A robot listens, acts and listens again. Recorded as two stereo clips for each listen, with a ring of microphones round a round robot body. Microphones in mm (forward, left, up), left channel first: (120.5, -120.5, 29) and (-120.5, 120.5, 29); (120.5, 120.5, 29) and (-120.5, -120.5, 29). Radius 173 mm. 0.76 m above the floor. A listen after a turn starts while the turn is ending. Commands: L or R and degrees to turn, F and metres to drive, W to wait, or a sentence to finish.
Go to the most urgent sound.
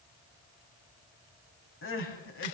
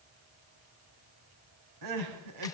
R100
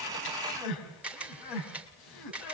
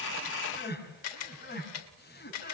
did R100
R20
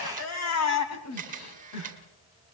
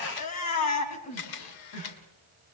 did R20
F1.0
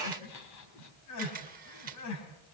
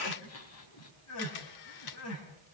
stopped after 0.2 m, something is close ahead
Something is in my way. I am facing the crying but have not reached it.